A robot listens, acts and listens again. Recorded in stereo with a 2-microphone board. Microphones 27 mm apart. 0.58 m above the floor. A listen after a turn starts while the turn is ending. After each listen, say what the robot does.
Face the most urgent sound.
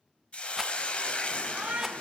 Turn 50° right.
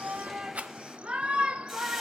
Turn 60° right.
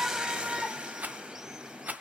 Turn 20° right.
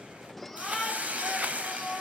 Facing the shout.